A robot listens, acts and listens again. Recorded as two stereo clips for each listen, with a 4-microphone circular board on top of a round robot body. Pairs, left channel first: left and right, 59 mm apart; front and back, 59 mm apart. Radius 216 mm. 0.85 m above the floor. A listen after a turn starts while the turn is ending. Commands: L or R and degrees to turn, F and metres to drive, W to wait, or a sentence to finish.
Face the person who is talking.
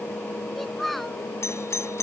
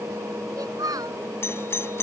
L180
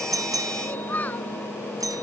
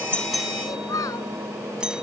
L25
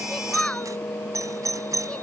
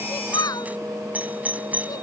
L15
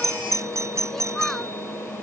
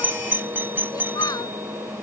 W
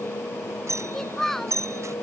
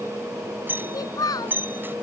Found it: a child speaking, straight ahead.